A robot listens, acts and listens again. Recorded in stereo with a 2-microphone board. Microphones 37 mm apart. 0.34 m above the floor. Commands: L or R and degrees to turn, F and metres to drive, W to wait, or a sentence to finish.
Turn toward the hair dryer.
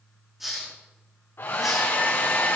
L90
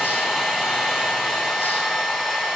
Found it: a hair dryer, straight ahead.